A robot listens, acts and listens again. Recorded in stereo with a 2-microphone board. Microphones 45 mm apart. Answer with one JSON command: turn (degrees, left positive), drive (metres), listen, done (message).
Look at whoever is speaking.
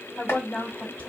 {"turn": 30}
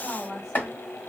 {"done": "Facing the woman speaking."}